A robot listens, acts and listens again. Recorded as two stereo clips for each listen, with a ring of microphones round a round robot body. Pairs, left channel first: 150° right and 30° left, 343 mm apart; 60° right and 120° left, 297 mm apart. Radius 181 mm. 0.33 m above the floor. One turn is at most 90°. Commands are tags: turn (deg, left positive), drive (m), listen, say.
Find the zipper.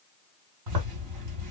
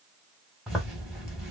<turn deg="30"/>
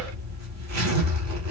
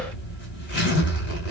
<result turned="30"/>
<turn deg="-10"/>
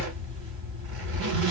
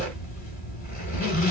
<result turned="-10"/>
<say>Found it: a zipper, straight ahead.</say>